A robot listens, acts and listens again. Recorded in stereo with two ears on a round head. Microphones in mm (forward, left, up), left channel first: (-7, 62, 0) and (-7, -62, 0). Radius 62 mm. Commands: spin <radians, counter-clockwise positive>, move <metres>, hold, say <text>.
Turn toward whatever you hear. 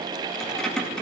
spin 0.52
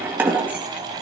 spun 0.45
spin -0.52
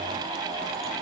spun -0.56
hold
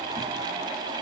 hold
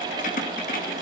spin 1.05
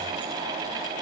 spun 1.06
hold
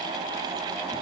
hold
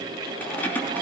spin 0.17
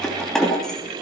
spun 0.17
say Facing the keys jangling, 2 to 4 m away.